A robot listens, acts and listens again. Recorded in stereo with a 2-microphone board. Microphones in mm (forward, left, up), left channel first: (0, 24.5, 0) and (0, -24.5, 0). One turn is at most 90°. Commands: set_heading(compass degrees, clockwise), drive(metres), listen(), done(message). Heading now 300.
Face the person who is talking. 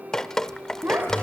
set_heading(350)
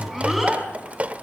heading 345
done("Found it: a child speaking, straight ahead.")